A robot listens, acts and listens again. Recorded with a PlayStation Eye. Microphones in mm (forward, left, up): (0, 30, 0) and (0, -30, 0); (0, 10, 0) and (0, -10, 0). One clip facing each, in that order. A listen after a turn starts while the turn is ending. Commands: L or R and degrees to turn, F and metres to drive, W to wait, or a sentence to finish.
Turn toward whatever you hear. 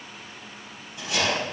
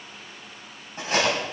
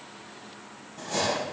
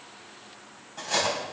R45
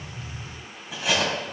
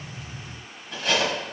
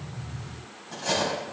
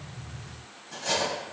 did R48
Found it: cutlery clinking, straight ahead, over 4 m away.